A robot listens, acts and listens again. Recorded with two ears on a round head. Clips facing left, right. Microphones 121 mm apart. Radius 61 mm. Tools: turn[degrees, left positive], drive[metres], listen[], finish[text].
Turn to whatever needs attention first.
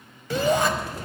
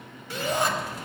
Thought: The shout: about 65° left or 115° left.
Action: turn[65]
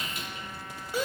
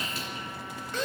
Thought: So it is at 10° left.
Action: turn[10]
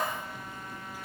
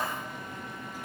Action: listen[]
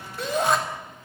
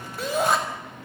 Action: finish[Found it: a shout, straight ahead, over 4 m away.]